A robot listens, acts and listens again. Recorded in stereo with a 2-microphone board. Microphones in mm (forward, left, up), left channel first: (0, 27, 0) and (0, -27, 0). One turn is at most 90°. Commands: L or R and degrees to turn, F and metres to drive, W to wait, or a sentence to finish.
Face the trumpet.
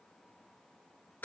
W
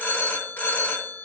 W
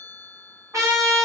R90
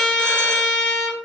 Found it: a trumpet, straight ahead, 1 to 2 m away.